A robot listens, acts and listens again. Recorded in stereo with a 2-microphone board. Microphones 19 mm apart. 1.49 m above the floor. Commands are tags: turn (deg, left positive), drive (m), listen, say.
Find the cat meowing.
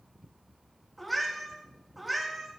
<turn deg="-30"/>
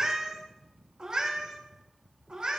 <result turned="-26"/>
<turn deg="-120"/>
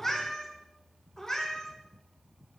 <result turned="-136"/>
<turn deg="35"/>
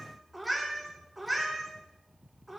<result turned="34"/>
<say>Facing the cat meowing, 2 to 4 m away.</say>